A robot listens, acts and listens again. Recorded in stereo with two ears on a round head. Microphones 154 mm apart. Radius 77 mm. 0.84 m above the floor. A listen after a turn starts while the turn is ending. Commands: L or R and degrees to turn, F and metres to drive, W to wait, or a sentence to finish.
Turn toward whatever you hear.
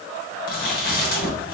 L55
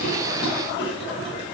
L70
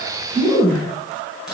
Facing the chewing.